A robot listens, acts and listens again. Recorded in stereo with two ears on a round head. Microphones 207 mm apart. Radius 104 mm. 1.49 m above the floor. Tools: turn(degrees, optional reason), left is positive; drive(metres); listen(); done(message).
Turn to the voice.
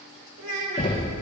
turn(degrees=-90)
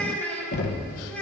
done("Found it: a child speaking, straight ahead, 2 to 4 m away.")